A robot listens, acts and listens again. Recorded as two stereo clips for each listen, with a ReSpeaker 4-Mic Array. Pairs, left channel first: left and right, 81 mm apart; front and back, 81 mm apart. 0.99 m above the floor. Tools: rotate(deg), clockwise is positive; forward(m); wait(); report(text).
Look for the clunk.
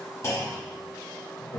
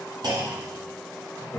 rotate(-140)
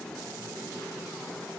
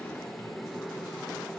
report("I heard a clunk from this way, but can't make it out now.")